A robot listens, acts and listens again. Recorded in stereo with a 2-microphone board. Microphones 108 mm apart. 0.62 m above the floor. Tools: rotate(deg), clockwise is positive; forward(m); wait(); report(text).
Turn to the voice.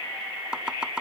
wait()
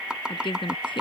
rotate(-50)
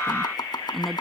report("Found it: a woman speaking, straight ahead.")